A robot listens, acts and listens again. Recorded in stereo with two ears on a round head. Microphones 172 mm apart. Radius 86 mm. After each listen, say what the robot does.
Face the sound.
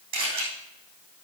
Turn 50° right.
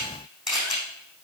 Found it: a camera shutter, straight ahead.